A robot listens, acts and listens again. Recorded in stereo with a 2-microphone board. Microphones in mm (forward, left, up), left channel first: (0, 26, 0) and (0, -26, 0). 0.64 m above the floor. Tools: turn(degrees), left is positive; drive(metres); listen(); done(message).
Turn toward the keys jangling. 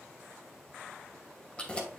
turn(degrees=20)
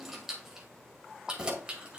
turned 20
turn(degrees=-20)
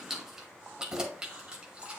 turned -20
turn(degrees=-20)
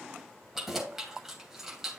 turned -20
done("Found it: keys jangling, straight ahead.")